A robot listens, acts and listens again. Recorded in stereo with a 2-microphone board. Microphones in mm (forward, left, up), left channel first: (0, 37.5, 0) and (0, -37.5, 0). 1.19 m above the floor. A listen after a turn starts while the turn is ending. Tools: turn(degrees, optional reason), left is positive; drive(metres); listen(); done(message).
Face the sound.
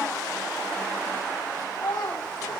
turn(degrees=60, reason="The child speaking: about 60° left or 120° left.")
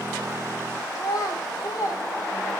turn(degrees=50, reason="So it is at 50° left.")
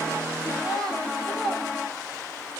turn(degrees=10, reason="The child speaking is now 10° left.")
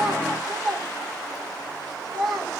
done("Found it: a child speaking, straight ahead.")